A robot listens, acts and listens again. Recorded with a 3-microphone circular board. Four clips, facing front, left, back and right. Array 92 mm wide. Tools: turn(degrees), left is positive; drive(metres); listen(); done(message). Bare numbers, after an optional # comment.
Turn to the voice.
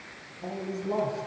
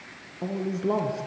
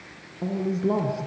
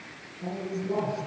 # The man speaking: 125° left.
turn(125)
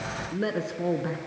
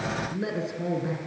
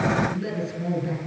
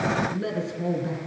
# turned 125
# The man speaking is now 10° left.
turn(10)
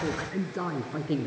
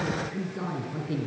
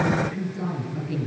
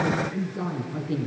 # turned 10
done("Found it: a man speaking, straight ahead, 2 to 4 m away.")